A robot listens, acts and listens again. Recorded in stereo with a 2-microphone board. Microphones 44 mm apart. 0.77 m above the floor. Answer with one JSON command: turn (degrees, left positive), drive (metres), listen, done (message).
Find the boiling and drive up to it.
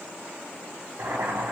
{"turn": -90}
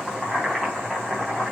{"drive": 1.0}
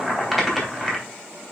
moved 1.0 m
{"drive": 1.0}
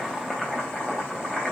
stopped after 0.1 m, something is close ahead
{"done": "Blocked. The boiling is further on, straight ahead."}